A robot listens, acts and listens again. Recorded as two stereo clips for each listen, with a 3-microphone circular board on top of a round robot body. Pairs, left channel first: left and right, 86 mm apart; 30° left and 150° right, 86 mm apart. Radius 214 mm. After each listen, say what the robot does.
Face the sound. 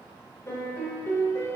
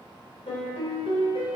Turn 30° left.
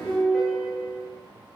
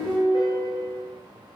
Found it: a piano, straight ahead, 1 to 2 m away.